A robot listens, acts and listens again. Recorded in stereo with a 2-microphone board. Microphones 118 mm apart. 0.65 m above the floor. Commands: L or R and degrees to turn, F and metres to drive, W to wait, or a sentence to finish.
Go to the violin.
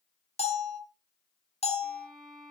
R30
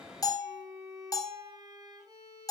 R145
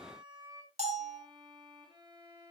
R40
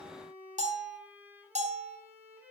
R15
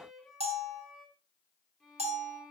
F1.0
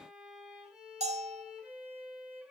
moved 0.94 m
F1.0
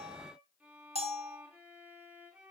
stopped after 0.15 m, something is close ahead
R10
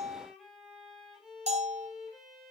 Blocked. The violin is further on, straight ahead.